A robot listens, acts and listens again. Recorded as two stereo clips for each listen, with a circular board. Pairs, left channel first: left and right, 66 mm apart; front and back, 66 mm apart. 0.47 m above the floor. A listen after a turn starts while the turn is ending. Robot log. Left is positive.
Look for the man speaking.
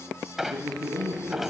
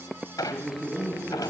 note: The man speaking: 105° right.
cmd yaw -105
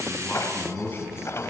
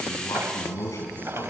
note: The man speaking is now 35° left.
cmd yaw +35
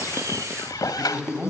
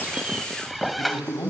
note: The man speaking is now 15° right.
cmd yaw -15
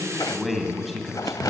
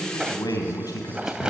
end: Found it: a man speaking, straight ahead, 2 to 4 m away.